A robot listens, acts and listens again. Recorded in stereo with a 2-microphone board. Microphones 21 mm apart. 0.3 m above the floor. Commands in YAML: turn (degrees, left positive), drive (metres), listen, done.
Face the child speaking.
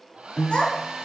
turn: 70
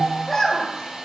done: "Found it: a child speaking, straight ahead."